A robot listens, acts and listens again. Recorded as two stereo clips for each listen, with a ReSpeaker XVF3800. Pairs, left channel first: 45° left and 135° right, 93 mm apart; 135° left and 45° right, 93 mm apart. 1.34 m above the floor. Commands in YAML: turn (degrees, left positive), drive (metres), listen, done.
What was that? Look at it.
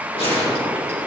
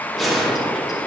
turn: 45
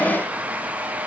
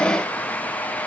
done: "I heard a gunshot from this way, but can't make it out now."